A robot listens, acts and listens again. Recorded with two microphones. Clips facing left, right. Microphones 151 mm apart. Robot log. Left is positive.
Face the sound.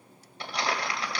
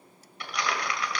note: The crumpling: about 35° left or 145° left.
cmd yaw +35
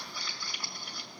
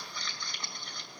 note: So it is at 10° left.
cmd yaw +10
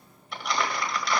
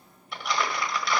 end: Found it: crumpling, straight ahead.